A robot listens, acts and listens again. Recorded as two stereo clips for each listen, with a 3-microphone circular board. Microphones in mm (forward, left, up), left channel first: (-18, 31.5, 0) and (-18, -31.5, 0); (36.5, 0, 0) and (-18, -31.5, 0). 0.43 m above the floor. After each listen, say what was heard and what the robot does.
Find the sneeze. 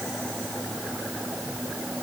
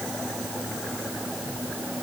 Keep listening.
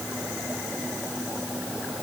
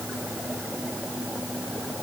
Keep listening.
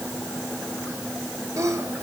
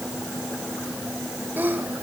The sneeze: 95° right. Turn 95° right.
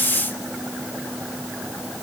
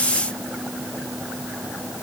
I heard a sneeze from this way, but can't make it out now.